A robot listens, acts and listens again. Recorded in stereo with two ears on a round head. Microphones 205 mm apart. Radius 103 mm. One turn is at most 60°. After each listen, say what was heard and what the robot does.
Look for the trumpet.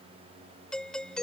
Keep listening.
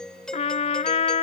The trumpet: about 30° left or 150° left. Turn 30° left.
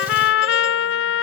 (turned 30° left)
So it is at 115° left. Turn 60° left.
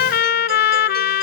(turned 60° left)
The trumpet is now 50° left. Turn 50° left.
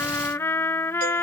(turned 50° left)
The trumpet is now 10° left. Turn 10° left.
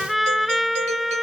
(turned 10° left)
Facing the trumpet.